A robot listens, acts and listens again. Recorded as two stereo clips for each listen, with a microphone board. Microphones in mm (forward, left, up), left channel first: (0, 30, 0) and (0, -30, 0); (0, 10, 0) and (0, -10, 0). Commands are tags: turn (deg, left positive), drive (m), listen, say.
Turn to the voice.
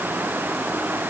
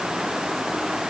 <listen/>
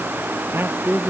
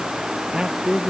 <turn deg="-40"/>
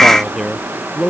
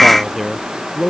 <say>Facing the man speaking.</say>